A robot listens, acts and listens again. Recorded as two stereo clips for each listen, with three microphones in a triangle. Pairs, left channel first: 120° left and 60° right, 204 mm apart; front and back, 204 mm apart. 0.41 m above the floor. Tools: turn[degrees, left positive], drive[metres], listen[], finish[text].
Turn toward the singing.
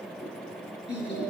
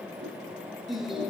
Thought: The singing: 90° left.
Action: turn[90]
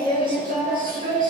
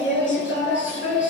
Thought: The singing is now 15° right.
Action: turn[-15]
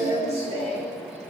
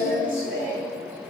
Action: finish[Found it: singing, straight ahead, over 4 m away.]